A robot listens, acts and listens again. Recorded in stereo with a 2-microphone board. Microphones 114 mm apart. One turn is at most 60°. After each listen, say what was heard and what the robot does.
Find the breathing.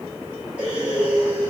Turn 30° right.
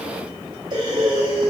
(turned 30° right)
So it is at 140° right. Turn 60° right.
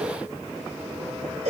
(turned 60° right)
The breathing is now 90° right. Turn 60° right.
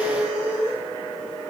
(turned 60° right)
The breathing is now 45° right. Turn 45° right.
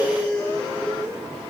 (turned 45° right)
The breathing is now 10° left. Turn 10° left.
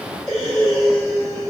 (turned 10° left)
Facing the breathing, 2 to 4 m away.